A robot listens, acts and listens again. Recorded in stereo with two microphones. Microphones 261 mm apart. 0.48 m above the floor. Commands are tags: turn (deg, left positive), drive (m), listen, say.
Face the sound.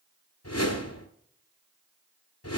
<turn deg="70"/>
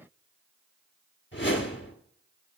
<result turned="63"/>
<turn deg="45"/>
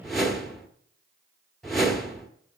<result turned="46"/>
<say>Facing the whoosh.</say>